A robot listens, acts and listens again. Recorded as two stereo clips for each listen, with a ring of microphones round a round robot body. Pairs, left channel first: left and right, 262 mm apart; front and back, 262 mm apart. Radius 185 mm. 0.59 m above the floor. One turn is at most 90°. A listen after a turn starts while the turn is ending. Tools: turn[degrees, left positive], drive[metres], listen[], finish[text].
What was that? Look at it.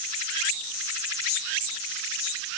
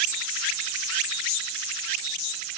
Action: listen[]
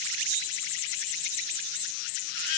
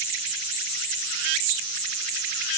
Action: listen[]
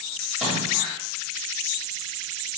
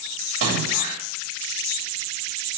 Thought: The splash: straight behind.
Action: turn[90]
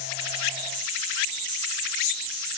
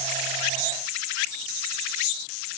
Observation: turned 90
Thought: Nothing new. It was at 90° left.
Action: turn[90]
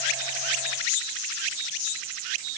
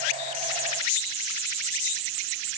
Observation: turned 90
Action: finish[Facing where the splash came from. I can't hear it now.]